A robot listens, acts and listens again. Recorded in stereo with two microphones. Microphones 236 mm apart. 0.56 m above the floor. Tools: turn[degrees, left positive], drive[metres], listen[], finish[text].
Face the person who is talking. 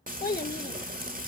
Thought: The child speaking: about 40° left or 140° left.
Action: turn[40]
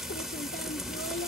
Action: listen[]
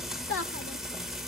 Thought: So it is at 95° left.
Action: turn[95]
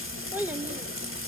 Thought: The child speaking is now 10° right.
Action: turn[-10]
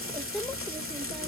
Action: listen[]
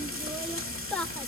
Action: finish[Facing the child speaking, under 1 m away.]